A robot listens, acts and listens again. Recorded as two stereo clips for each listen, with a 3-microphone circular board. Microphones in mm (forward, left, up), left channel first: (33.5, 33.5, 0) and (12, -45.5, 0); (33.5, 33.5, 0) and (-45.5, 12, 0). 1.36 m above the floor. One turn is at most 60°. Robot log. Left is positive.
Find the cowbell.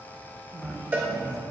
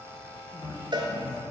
note: The cowbell: 170° right.
cmd yaw -60
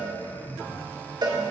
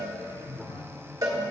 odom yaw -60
note: The cowbell is now 120° right.
cmd yaw -60
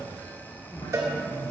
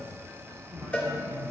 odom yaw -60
note: The cowbell is now 55° right.
cmd yaw -55
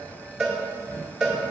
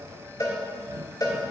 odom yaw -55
note: The cowbell is now 20° right.
cmd yaw -20
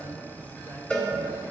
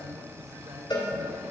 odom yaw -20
end: Facing the cowbell, 1 to 2 m away.